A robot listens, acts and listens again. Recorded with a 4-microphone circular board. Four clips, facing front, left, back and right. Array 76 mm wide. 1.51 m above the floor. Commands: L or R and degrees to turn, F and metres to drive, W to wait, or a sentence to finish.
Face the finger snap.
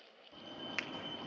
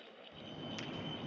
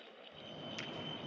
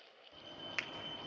R45
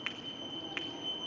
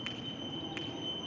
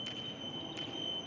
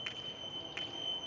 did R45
W
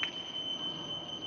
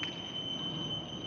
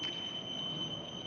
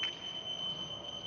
W
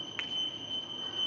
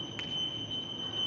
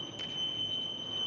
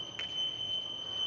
I heard a finger snap from this way, but can't make it out now.